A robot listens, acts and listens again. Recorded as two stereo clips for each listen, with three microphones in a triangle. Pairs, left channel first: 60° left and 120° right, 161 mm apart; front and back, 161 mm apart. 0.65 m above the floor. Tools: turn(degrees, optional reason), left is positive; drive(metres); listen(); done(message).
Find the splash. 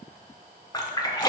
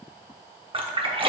turn(degrees=125, reason="The splash: 125° left.")
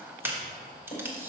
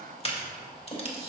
done("Facing where the splash came from. I can't hear it now.")